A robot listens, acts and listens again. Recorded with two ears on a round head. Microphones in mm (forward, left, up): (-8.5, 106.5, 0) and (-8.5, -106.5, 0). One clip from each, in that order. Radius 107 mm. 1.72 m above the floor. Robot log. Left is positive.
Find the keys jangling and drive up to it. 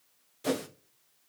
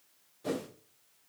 cmd idle
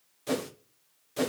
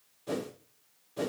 cmd idle
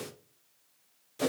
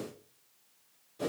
end: I can't make out keys jangling, only a whoosh.